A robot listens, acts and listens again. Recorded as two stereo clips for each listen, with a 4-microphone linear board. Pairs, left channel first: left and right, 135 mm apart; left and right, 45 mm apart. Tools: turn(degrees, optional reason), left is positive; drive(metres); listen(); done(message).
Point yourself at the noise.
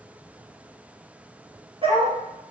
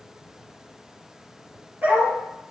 turn(degrees=-40, reason="The dog barking: about 40° right or 140° right.")
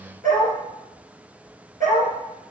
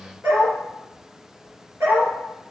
turn(degrees=-100, reason="So it is at 100° right.")
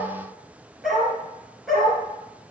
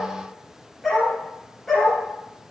done("Found it: a dog barking, straight ahead.")